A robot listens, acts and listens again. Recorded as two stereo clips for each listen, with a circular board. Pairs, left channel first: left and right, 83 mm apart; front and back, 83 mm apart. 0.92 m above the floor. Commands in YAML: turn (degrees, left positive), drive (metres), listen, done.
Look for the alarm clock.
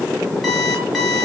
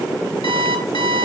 done: "Facing the alarm clock, over 4 m away."